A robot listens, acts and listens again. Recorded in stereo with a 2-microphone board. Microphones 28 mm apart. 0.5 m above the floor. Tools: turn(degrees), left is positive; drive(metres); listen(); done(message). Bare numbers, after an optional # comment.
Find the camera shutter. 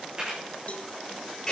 # The camera shutter: about 25° right or 155° right.
turn(-25)
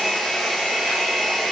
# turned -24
listen()
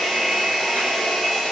listen()
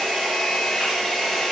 done("I heard a camera shutter, but can't make it out now. It was about straight ahead or 130° right.")